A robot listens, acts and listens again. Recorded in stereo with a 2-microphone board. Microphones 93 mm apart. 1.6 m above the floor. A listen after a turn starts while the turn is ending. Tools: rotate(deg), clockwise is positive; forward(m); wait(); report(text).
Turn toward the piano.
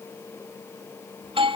wait()
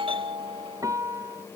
rotate(35)
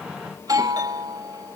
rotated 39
wait()
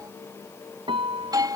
rotate(105)
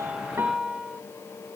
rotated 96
report("Found it: a piano, straight ahead.")